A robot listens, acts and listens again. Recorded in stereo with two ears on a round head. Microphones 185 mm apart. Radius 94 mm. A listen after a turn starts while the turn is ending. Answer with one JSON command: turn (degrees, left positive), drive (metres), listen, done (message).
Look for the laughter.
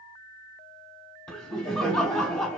{"turn": 30}
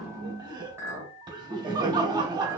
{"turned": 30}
{"turn": -25}
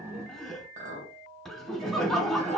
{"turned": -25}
{"done": "Found it: laughter, straight ahead, 1 to 2 m away."}